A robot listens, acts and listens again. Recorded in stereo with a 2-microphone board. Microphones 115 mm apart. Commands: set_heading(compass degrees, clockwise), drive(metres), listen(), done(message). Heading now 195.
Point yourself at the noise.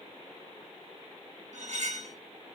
set_heading(265)
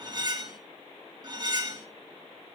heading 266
set_heading(301)
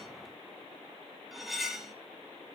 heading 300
done("Facing the cutlery clinking, 1 to 2 m away.")